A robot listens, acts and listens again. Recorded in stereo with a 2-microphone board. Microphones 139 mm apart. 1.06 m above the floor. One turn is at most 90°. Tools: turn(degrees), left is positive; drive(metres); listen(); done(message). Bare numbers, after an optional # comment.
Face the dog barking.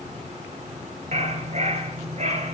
# The dog barking: about 55° right or 125° right.
turn(-55)
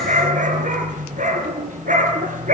# So it is at 70° right.
turn(-70)
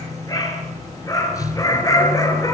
# The dog barking is now 25° left.
turn(25)
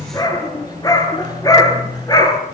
# The dog barking is now 30° left.
turn(30)
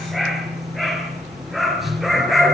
done("Found it: a dog barking, straight ahead.")